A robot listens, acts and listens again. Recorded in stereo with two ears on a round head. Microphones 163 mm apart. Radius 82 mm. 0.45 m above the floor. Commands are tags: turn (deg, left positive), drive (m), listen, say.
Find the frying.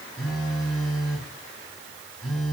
<listen/>
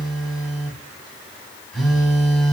<listen/>
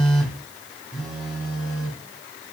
<say>I can't make out frying, only a phone buzzing.</say>